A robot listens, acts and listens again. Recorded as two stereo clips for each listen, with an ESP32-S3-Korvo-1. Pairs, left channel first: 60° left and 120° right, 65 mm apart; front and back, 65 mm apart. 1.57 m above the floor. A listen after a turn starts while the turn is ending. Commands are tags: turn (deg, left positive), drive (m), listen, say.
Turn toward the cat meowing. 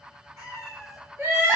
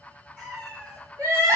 <turn deg="-110"/>
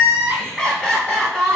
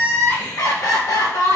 <listen/>
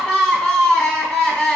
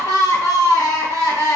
<listen/>
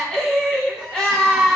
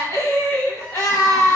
<say>Facing where the cat meowing came from. I can't hear it now.</say>